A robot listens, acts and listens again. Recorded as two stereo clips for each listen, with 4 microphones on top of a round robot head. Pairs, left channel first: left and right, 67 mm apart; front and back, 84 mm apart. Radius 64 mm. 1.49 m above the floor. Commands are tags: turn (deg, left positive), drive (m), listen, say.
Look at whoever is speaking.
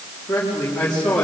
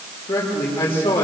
<turn deg="20"/>
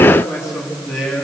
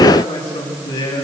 <say>Found it: a man speaking, straight ahead, 2 to 4 m away.</say>